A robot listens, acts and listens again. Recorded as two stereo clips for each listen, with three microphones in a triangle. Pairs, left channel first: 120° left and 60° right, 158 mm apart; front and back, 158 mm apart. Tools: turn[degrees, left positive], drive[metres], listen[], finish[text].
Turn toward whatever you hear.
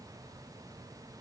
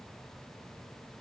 Action: listen[]
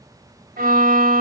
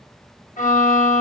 Thought: The violin: 40° right.
Action: turn[-40]
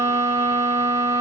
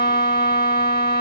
Thought: The violin is now 15° left.
Action: turn[15]
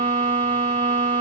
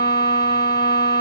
Action: finish[Facing the violin, under 1 m away.]